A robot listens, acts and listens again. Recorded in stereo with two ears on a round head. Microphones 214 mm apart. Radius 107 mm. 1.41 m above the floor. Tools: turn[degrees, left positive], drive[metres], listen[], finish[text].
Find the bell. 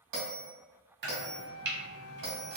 Action: turn[-90]
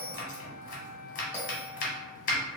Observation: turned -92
Thought: So it is at 10° right.
Action: turn[-10]
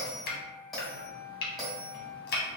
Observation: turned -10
Action: finish[Found it: a bell, straight ahead, 1 to 2 m away.]